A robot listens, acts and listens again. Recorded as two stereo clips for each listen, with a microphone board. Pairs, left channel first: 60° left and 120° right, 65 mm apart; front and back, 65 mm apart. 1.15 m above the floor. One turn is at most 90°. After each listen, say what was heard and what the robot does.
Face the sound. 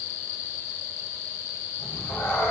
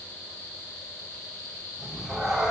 The cat meowing: 100° left. Turn 90° left.
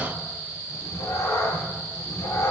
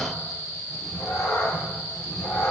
The cat meowing is now 30° left. Turn 30° left.
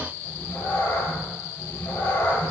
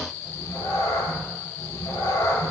Found it: a cat meowing, straight ahead.